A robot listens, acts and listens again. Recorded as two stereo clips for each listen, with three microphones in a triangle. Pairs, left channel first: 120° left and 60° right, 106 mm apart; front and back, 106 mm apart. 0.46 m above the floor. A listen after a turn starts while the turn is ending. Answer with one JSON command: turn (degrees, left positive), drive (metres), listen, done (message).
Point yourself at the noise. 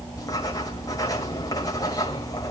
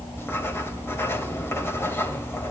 {"turn": 65}
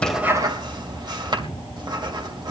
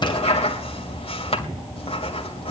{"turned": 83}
{"turn": -15}
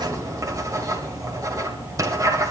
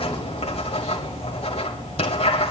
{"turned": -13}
{"done": "Found it: writing, straight ahead, 2 to 4 m away."}